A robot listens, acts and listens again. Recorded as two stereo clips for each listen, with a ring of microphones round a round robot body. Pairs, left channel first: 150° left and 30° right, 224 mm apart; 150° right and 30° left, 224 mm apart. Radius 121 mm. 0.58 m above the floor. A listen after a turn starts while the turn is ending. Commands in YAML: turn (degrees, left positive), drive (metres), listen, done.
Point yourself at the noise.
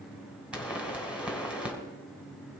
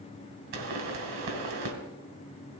turn: 55
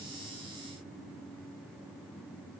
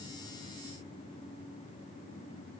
done: "Facing where the pop came from. I can't hear it now."